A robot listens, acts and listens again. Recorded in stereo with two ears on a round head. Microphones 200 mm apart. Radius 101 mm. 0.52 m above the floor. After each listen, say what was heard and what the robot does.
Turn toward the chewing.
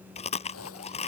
The chewing: about 30° left or 150° left. Turn 30° left.
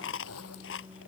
So it is at 115° left. Turn 115° left.
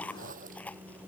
Facing the chewing.